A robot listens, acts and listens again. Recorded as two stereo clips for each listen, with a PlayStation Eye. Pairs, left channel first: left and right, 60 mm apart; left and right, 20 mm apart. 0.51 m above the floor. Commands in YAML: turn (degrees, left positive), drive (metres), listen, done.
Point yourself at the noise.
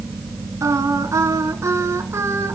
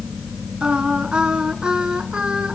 turn: -55
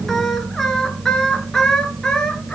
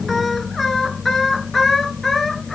turn: 15
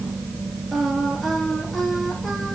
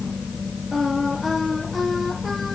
listen: true
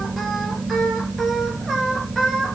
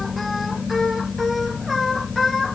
done: "Facing the singing."